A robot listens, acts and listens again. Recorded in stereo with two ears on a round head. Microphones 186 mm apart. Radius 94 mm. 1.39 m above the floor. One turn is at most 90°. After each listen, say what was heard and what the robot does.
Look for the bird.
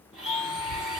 The bird: about 55° left or 125° left. Turn 55° left.
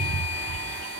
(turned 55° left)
Facing the bird, under 1 m away.